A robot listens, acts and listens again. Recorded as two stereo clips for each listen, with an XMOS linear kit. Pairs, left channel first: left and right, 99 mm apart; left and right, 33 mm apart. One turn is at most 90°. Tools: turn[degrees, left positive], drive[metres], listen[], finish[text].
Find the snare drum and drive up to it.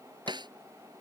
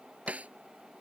Thought: The snare drum: about 50° right or 130° right.
Action: turn[-50]
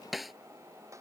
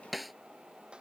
Action: drive[1.0]
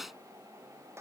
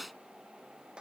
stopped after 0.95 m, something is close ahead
Action: finish[Arrived at the snare drum, straight ahead.]